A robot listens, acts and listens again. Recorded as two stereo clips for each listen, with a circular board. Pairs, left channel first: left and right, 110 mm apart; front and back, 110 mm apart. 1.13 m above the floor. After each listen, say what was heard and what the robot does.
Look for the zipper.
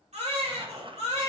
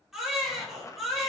The zipper: 60° right. Turn 60° right.
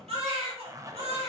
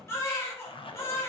The zipper is now 30° right. Turn 30° right.
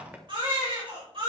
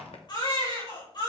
The zipper is now 15° right. Turn 15° right.
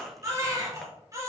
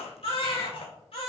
Keep listening.
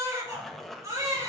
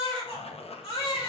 Found it: a zipper, straight ahead.